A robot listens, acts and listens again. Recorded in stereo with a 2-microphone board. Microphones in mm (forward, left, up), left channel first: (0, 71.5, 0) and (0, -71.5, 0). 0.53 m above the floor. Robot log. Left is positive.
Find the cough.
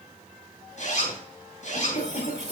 note: The cough: about 50° left or 130° left.
cmd yaw +50
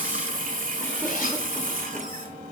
cmd idle
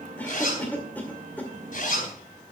note: So it is at 15° left.
cmd yaw +15
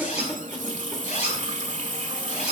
end: Found it: a cough, straight ahead.